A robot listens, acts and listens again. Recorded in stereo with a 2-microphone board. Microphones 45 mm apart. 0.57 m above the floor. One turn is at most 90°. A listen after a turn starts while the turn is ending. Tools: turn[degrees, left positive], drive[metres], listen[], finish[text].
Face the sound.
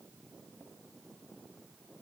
Action: listen[]
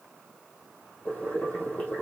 Thought: The boiling: about 35° left or 145° left.
Action: turn[35]
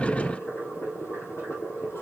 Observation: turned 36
Thought: So it is at 110° left.
Action: turn[90]
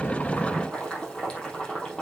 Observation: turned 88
Thought: The boiling is now 20° left.
Action: turn[20]
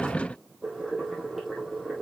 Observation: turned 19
Action: finish[Found it: boiling, straight ahead.]